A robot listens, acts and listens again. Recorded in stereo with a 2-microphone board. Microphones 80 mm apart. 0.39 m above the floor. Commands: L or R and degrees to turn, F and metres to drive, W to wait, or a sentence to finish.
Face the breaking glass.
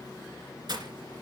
R55
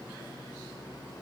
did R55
W
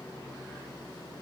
I heard breaking glass, but can't make it out now. It was about straight ahead or 70° right.